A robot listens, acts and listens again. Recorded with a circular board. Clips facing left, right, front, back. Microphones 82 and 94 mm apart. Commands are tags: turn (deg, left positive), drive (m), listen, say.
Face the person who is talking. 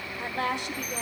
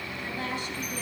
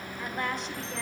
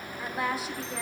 <turn deg="95"/>
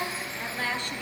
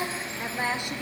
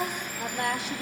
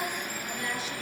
<turn deg="-15"/>
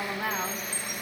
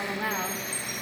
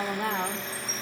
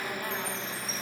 <say>Facing the woman speaking.</say>